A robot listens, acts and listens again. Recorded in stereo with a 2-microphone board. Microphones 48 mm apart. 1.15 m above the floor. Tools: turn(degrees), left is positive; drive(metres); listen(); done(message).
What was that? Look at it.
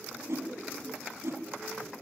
turn(degrees=-70)
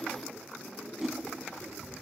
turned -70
done("Facing the whoosh.")